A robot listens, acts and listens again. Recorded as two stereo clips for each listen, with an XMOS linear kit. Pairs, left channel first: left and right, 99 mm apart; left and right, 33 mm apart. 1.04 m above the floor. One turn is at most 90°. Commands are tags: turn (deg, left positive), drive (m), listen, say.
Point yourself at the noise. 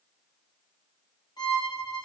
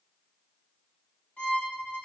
<turn deg="50"/>
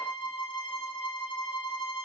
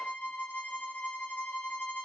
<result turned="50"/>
<turn deg="80"/>
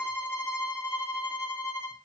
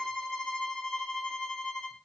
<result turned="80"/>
<turn deg="20"/>
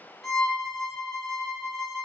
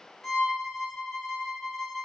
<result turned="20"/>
<say>Found it: a violin, straight ahead, under 1 m away.</say>